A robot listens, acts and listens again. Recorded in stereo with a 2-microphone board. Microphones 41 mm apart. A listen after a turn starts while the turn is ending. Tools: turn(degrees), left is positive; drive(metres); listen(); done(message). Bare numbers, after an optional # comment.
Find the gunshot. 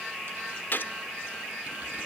# The gunshot: about 55° left or 125° left.
turn(55)
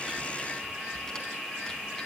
listen()
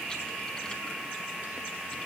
done("I heard a gunshot, but can't make it out now. It was about straight ahead or 70° left.")